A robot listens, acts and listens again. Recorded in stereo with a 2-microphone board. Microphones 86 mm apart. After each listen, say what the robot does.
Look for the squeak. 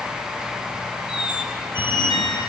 Turn 70° left.
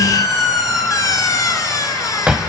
Turn 40° left.
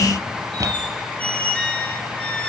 Turn 15° left.
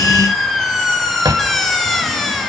Found it: a squeak, straight ahead.